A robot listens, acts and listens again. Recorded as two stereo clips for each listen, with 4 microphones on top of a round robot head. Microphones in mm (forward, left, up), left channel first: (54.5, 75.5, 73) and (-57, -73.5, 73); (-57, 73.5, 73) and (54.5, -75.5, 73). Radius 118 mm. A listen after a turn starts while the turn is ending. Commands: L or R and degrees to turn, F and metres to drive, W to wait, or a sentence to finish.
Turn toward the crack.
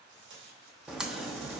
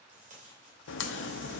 L145
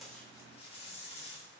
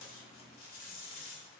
I heard a crack from this way, but can't make it out now.